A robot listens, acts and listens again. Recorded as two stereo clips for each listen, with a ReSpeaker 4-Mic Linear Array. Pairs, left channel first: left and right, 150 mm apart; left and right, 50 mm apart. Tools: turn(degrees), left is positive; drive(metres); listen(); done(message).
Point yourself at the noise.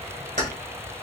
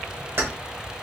turn(degrees=-60)
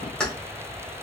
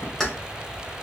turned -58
done("Facing the keys jangling, 1 to 2 m away.")